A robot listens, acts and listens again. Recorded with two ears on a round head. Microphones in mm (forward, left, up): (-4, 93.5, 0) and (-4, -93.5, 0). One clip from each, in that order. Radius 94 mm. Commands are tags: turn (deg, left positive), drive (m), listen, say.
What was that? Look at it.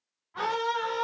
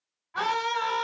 <turn deg="-50"/>
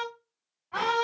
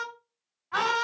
<turn deg="-60"/>
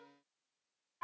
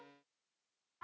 <turn deg="20"/>
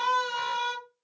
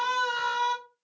<say>Facing the scream.</say>